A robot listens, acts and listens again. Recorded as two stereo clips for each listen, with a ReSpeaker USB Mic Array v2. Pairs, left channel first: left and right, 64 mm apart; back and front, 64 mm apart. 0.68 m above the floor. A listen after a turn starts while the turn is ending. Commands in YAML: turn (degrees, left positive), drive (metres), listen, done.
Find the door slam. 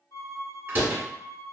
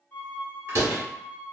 turn: -40
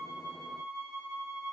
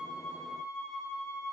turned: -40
done: "Facing where the door slam came from. I can't hear it now."